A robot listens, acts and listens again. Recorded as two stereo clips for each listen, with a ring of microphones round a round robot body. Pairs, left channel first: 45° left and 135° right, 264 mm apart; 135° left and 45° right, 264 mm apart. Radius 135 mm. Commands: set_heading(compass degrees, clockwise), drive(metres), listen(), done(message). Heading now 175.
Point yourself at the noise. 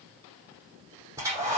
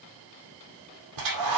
set_heading(230)
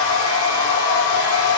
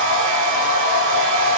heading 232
done("Facing the hair dryer, over 4 m away.")